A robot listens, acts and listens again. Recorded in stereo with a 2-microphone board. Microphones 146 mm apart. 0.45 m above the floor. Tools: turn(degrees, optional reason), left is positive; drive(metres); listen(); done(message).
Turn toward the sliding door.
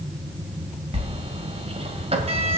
turn(degrees=-45, reason="The sliding door: about 45° right or 135° right.")
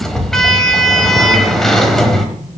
done("Found it: a sliding door, straight ahead.")